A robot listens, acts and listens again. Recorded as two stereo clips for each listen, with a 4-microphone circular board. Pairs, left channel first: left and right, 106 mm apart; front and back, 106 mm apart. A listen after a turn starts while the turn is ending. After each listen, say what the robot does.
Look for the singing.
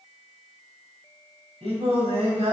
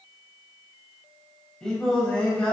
Turn 80° right.
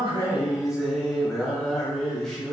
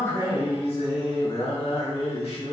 Found it: singing, straight ahead.